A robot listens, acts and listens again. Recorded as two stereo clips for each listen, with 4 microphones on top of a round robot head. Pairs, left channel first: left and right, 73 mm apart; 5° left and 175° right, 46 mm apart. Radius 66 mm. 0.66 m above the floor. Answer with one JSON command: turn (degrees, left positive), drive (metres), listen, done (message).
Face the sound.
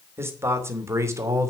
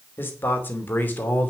{"turn": -45}
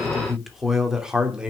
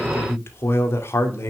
{"turn": -15}
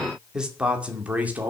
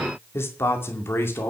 {"turn": -25}
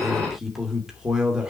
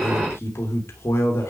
{"turn": -10}
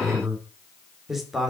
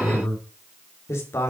{"done": "Found it: a man speaking, straight ahead."}